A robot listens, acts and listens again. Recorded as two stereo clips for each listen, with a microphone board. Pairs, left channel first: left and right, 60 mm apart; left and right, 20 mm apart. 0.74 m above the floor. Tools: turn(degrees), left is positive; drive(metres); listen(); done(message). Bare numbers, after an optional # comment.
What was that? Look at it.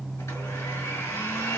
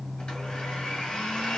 # The blender: about 55° left or 125° left.
turn(55)
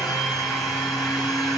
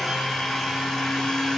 done("Facing the blender, 2 to 4 m away.")